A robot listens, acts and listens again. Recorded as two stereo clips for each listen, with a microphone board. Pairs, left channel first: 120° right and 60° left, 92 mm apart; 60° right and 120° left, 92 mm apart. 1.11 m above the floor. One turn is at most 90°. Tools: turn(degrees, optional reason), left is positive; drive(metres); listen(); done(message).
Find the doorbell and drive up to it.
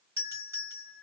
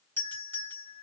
drive(metres=1.0)
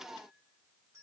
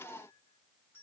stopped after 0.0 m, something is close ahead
listen()
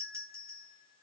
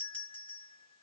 turn(degrees=10, reason="The doorbell is now 10° left.")
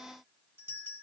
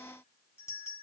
done("Blocked. The doorbell is further on, straight ahead.")